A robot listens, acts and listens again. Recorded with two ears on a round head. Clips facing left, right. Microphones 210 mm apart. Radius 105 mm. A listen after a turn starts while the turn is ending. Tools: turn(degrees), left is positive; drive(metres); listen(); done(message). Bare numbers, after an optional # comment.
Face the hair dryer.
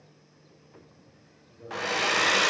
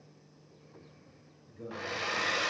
# The hair dryer: about 65° left or 115° left.
turn(65)
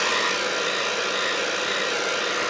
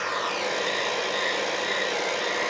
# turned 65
# So it is at 10° left.
turn(10)
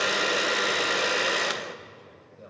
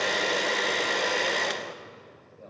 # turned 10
done("Facing the hair dryer.")